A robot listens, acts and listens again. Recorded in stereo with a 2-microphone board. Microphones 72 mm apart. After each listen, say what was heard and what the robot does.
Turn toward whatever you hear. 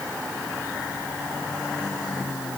Keep listening.
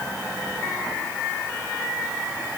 Keep listening.
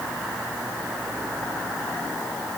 I can't make out anything.